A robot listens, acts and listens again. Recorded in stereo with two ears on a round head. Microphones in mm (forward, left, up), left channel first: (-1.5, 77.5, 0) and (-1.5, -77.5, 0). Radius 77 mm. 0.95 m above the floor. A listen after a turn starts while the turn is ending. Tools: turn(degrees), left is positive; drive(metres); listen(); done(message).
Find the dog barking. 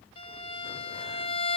listen()
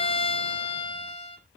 listen()
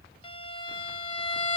done("I can't make out a dog barking to turn to.")